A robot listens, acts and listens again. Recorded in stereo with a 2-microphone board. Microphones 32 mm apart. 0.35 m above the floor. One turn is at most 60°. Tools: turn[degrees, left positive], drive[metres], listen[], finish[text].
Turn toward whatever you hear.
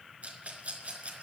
Thought: The rattle: about 50° right or 130° right.
Action: turn[-50]
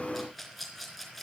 Action: finish[Facing the rattle, 2 to 4 m away.]